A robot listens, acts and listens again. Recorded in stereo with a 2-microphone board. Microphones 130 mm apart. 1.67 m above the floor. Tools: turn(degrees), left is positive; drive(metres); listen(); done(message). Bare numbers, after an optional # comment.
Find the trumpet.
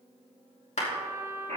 # The trumpet: about 20° right or 160° right.
turn(-20)
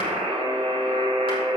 listen()
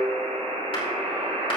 listen()
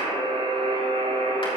done("I heard a trumpet, but can't make it out now. It was about straight ahead or 140° right.")